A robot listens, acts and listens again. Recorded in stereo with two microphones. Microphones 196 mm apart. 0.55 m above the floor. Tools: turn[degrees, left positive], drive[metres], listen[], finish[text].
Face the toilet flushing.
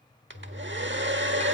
Action: turn[90]
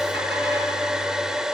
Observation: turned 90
Action: listen[]
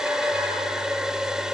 Action: listen[]
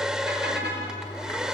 Thought: The toilet flushing is now 15° left.
Action: turn[15]
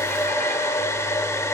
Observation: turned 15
Action: listen[]
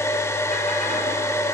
Action: listen[]
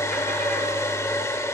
Action: finish[Facing where the toilet flushing came from. I can't hear it now.]